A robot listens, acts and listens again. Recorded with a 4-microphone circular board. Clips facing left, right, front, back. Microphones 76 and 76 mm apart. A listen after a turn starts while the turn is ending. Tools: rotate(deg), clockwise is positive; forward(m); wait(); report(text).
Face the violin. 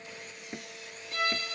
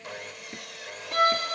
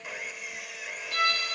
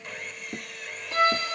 rotate(120)
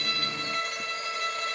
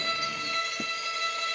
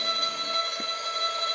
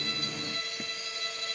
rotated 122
report("Found it: a violin, straight ahead.")